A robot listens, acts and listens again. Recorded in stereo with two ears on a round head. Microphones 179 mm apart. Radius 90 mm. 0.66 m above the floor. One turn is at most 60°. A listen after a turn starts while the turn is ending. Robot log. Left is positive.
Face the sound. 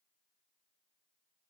cmd idle
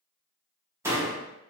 cmd yaw -30
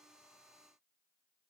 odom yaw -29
cmd idle
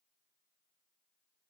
end: I heard a door slam, but can't make it out now. It was about 15° left or 135° right.